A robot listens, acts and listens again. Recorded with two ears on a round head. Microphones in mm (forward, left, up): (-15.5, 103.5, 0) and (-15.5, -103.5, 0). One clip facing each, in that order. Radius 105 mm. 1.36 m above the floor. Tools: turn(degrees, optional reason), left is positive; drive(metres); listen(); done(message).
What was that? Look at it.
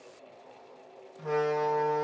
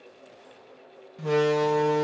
turn(degrees=-45, reason="The door slam: about 45° right or 135° right.")
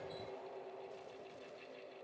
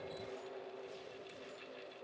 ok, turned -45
listen()
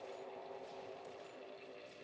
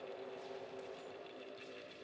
done("I heard a door slam, but can't make it out now. It was about straight ahead or 90° right.")